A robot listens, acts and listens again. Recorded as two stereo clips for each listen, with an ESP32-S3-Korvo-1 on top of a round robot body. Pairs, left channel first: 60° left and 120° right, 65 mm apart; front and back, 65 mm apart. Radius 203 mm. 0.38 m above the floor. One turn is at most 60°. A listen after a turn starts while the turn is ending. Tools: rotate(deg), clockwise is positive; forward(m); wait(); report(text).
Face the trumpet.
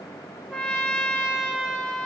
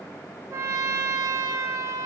rotate(-60)
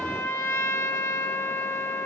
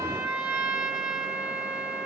rotate(-60)
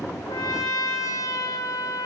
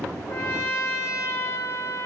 rotate(-40)
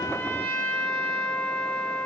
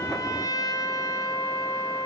rotate(10)
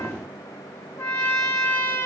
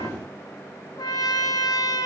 report("Facing the trumpet.")